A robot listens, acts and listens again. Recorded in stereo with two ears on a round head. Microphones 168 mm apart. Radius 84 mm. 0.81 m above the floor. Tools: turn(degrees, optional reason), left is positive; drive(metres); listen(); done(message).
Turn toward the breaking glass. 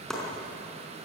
listen()
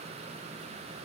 listen()
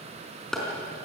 done("I can't make out breaking glass, only chopping.")